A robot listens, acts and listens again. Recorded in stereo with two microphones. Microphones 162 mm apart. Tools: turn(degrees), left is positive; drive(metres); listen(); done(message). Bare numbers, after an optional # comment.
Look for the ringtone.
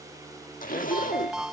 turn(-30)
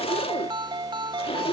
# So it is at 150° right.
turn(-150)
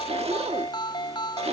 # The ringtone is now 30° left.
turn(30)
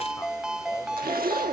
done("Found it: a ringtone, straight ahead.")